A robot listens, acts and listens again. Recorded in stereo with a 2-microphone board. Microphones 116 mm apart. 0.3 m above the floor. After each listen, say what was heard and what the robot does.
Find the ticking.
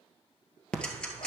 Turn 30° left.
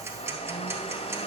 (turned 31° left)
So it is at 20° right. Turn 20° right.
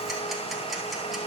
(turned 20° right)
Keep listening.
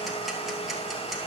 Keep listening.
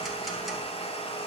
Facing where the ticking came from. I can't hear it now.